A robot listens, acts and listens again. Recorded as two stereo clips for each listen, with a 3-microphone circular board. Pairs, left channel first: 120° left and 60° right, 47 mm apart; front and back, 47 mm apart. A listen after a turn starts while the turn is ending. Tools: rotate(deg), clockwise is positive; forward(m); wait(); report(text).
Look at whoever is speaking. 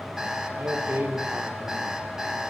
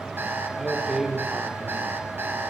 rotate(95)
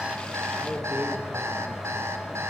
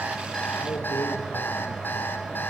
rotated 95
wait()
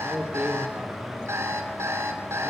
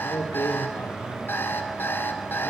report("Found it: a man speaking, straight ahead, over 4 m away.")